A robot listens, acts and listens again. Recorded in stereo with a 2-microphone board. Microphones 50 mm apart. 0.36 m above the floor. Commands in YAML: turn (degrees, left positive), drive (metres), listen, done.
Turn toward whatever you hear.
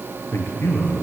turn: 55
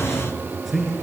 done: "Found it: a man speaking, straight ahead."